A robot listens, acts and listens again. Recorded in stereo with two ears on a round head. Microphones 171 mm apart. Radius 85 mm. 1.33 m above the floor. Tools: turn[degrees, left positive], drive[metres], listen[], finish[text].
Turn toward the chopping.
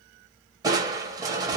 Action: listen[]
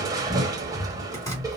Thought: The chopping: about 15° left or 165° left.
Action: turn[15]
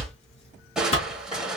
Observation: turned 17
Thought: So it is at 145° left.
Action: turn[145]
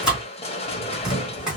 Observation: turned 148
Action: finish[Facing the chopping.]